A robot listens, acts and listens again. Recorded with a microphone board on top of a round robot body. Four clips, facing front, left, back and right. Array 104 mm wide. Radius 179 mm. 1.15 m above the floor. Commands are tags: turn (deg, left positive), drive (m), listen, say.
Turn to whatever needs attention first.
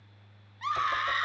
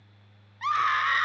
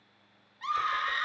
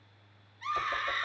<turn deg="80"/>
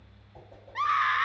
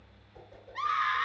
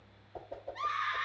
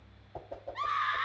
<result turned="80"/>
<say>Found it: a scream, straight ahead, 1 to 2 m away.</say>